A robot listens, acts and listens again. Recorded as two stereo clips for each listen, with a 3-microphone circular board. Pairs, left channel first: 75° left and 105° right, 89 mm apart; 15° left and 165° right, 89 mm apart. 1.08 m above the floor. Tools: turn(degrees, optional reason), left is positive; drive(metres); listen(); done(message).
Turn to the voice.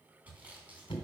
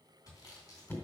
listen()
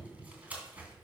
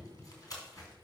listen()
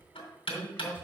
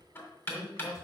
turn(degrees=15, reason="The man speaking: 15° left.")
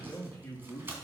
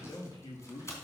done("Found it: a man speaking, straight ahead.")